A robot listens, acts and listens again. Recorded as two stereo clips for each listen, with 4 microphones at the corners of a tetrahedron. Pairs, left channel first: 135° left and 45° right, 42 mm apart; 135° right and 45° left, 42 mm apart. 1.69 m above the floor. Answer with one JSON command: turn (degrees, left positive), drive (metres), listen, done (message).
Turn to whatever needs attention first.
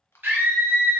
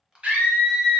{"turn": -10}
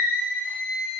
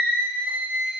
{"done": "Found it: a scream, straight ahead, 1 to 2 m away."}